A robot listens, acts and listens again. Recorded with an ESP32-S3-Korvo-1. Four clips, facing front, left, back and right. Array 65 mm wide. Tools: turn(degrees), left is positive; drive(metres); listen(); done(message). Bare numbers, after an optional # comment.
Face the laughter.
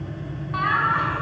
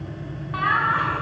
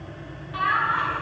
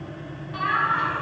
# The laughter: 50° left.
turn(50)
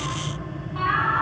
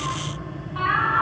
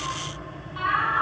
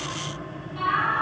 # The laughter is now 40° left.
turn(40)
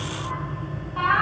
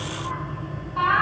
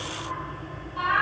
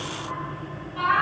# The laughter is now 15° left.
turn(15)
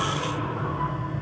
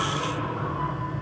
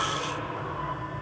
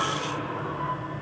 listen()
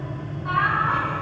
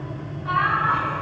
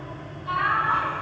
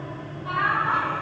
# The laughter is now 15° left.
turn(15)
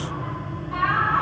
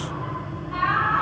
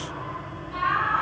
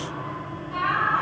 done("Facing the laughter, over 4 m away.")